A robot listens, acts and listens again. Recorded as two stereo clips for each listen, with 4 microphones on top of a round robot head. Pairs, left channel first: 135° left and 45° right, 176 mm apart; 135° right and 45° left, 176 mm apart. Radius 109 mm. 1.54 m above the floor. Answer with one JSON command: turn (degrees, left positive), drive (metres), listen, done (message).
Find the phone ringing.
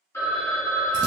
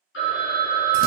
{"turn": -150}
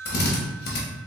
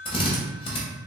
{"turn": -10}
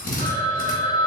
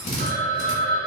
{"done": "Facing the phone ringing."}